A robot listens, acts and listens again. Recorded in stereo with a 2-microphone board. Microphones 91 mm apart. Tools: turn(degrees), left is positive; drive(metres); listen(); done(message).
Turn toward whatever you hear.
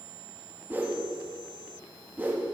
turn(degrees=-20)
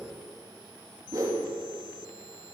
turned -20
turn(degrees=-140)
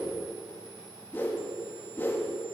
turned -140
turn(degrees=20)
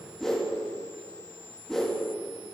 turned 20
done("Found it: a whoosh, straight ahead, under 1 m away.")